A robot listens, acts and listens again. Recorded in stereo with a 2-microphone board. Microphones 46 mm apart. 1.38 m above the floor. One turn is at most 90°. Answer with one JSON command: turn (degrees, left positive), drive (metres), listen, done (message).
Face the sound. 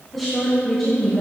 {"turn": 30}
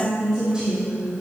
{"turn": -15}
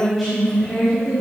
{"done": "Facing the woman speaking."}